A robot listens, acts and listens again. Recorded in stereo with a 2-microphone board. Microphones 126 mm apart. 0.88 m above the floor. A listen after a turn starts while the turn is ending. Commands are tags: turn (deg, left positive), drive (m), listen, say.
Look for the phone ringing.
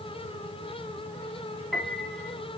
<listen/>
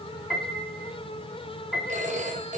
<turn deg="-90"/>
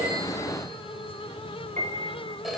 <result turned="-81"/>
<say>Found it: a phone ringing, straight ahead, 2 to 4 m away.</say>